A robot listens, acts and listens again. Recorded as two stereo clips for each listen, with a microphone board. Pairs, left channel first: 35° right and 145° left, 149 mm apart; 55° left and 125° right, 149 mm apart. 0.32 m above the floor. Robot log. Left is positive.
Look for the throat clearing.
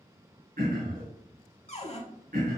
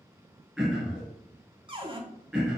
note: The throat clearing: 150° left.
cmd yaw +150
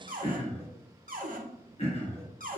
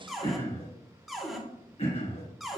note: The throat clearing is now 10° left.
cmd yaw +10
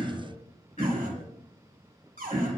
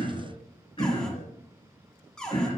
end: Found it: throat clearing, straight ahead.